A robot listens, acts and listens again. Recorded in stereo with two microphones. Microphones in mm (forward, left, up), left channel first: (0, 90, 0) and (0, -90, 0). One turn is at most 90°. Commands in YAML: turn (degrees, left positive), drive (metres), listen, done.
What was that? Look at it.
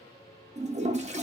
turn: -40
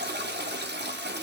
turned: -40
turn: -90
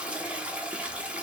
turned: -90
done: "Found it: a toilet flushing, straight ahead."